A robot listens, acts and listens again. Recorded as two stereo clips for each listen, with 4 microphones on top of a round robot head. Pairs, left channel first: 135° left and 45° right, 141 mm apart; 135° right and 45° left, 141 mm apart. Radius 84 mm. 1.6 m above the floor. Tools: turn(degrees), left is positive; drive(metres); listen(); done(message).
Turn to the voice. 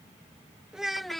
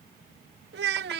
turn(degrees=50)
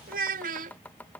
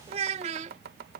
done("Found it: a child speaking, straight ahead.")